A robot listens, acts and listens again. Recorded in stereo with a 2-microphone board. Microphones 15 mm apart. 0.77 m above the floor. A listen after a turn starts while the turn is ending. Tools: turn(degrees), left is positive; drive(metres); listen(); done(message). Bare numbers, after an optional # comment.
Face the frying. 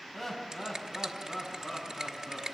listen()
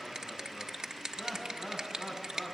listen()
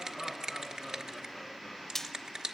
# The frying: about 25° left or 155° left.
turn(25)
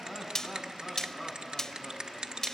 # So it is at 130° left.
turn(130)
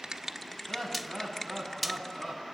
done("Found it: frying, straight ahead, under 1 m away.")